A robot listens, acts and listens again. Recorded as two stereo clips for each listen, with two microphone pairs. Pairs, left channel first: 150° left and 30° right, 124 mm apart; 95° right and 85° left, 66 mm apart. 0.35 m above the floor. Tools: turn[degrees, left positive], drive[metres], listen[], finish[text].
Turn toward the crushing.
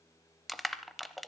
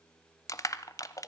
Thought: The crushing: 120° right.
Action: turn[-120]
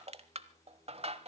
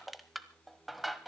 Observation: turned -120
Action: finish[Found it: crushing, straight ahead.]